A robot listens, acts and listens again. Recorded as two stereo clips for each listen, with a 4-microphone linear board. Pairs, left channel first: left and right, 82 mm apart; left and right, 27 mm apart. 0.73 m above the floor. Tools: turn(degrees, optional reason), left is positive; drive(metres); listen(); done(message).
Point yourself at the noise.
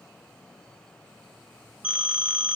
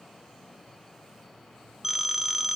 turn(degrees=-30)
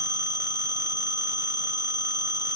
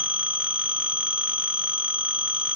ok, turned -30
turn(degrees=-135, reason="So it is at 135° right.")
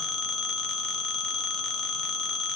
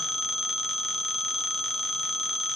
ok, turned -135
done("Found it: a phone ringing, straight ahead.")